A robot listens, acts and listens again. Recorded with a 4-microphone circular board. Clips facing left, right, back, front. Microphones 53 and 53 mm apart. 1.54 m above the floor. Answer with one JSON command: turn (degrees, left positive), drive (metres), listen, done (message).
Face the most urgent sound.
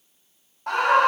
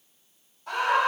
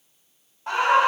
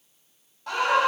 {"turn": 120}
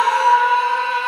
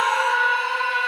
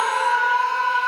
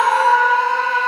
{"done": "Found it: a scream, straight ahead, 1 to 2 m away."}